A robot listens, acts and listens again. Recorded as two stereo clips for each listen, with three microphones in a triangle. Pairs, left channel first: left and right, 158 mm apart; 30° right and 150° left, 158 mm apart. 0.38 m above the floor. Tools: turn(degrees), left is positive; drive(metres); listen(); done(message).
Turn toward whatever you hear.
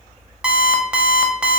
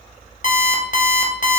done("Facing the alarm clock, under 1 m away.")